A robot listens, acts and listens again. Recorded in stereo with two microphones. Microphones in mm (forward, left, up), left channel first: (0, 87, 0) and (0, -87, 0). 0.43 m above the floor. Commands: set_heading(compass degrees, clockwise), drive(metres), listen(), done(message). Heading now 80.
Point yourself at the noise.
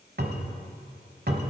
set_heading(145)
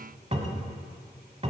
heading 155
set_heading(195)
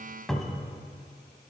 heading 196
done("Facing the cupboard door, 1 to 2 m away.")